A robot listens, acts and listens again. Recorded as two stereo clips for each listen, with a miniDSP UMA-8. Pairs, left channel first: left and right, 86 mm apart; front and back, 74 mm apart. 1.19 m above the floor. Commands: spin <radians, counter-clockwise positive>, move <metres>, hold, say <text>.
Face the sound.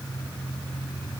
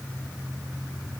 hold
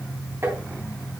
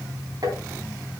spin -2.62
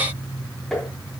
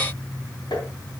say Facing the tapping, over 4 m away.